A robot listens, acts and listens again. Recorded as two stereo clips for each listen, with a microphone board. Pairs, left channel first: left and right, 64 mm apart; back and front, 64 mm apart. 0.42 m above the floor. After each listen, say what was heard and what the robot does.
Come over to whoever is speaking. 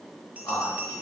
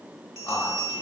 The man speaking: 130° left. Turn 130° left.
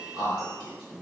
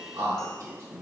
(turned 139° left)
The man speaking is now 10° right. Turn 10° right.
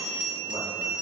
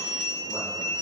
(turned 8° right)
Keep listening.
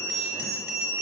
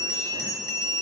Keep listening.
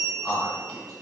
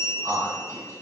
Drive 1.0 m forward.
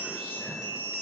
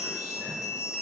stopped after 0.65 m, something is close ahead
Keep listening.
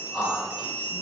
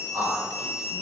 I am next to the man speaking.